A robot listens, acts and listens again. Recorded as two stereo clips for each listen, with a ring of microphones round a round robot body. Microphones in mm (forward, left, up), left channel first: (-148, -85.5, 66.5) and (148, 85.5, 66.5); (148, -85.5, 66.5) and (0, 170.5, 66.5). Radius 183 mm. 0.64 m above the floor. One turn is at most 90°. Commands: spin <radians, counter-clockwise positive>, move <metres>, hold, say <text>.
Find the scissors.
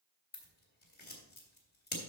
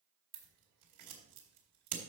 spin 1.57
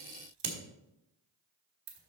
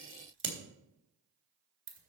spin 1.22
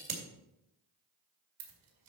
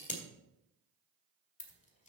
say Facing the scissors.